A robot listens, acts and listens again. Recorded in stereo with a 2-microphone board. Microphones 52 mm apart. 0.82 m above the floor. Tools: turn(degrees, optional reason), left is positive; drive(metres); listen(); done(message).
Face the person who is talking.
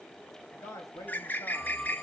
turn(degrees=90)
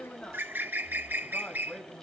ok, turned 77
turn(degrees=25, reason="So it is at 25° left.")
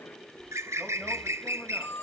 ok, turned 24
listen()
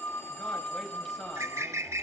listen()
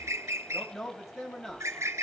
done("Facing the man speaking, over 4 m away.")